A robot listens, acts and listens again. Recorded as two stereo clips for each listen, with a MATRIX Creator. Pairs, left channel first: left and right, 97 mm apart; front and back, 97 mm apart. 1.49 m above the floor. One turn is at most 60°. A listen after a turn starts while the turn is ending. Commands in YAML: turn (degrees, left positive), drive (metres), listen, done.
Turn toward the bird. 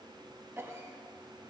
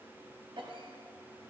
listen: true
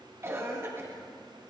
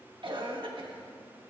listen: true
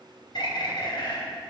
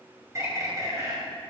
turn: 60
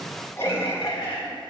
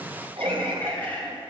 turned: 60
turn: 60
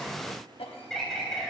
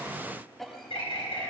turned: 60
done: "Facing the bird."